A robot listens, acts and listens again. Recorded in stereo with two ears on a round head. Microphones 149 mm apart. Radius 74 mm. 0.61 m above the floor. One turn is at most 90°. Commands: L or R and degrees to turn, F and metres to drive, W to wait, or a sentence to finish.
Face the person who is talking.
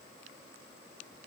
W
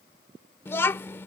L15
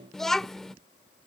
Facing the child speaking.